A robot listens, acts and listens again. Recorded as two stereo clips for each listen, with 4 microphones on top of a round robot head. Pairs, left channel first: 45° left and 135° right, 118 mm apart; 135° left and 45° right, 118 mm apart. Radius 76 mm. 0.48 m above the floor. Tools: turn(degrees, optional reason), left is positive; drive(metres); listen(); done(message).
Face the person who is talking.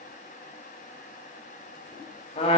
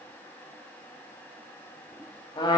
listen()
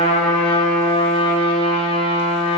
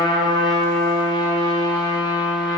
listen()
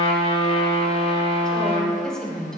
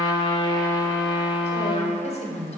turn(degrees=125, reason="The woman speaking: 125° left.")
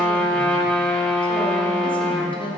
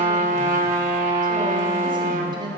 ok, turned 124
done("Found it: a woman speaking, straight ahead, 1 to 2 m away.")